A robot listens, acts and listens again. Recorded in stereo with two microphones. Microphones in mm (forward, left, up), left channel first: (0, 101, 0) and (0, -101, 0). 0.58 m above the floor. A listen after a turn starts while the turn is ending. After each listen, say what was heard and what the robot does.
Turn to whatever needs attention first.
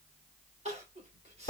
The crying: about 35° right or 145° right. Turn 35° right.
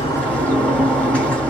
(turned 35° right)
Keep listening.
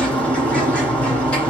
Keep listening.
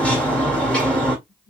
I heard crying, but can't make it out now. It was about straight ahead or 110° right.